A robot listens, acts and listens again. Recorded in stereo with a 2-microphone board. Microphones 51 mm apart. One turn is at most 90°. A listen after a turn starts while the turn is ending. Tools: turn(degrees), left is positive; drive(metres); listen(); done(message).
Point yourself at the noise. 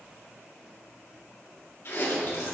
turn(degrees=50)
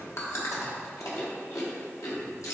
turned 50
turn(degrees=80)
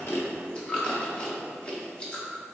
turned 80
turn(degrees=25)
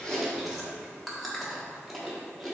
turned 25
done("Found it: chewing, straight ahead, 1 to 2 m away.")